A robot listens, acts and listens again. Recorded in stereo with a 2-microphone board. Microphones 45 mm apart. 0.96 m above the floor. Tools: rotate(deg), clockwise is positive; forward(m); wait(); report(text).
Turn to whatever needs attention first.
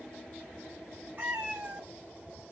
wait()
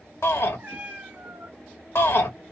rotate(-70)
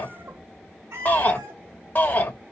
rotate(-40)
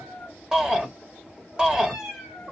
rotate(20)
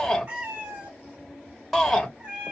report("Facing the shout, under 1 m away.")